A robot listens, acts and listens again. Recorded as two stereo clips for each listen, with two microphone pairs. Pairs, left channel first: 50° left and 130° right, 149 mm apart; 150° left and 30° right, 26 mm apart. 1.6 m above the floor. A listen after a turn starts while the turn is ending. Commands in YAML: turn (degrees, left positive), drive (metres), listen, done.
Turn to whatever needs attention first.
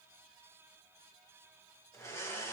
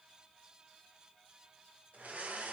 listen: true
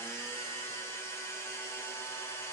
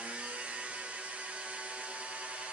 listen: true
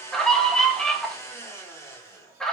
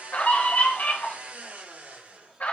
turn: 135
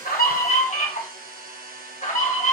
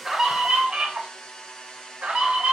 turn: 15
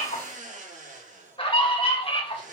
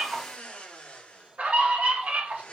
done: "Facing the scream, 2 to 4 m away."